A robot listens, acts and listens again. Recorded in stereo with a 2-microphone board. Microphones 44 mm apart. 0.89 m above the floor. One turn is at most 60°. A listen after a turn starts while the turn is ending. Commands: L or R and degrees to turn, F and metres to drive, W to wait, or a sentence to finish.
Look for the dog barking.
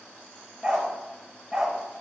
R30
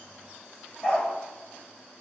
L20
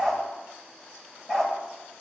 Found it: a dog barking, straight ahead, 1 to 2 m away.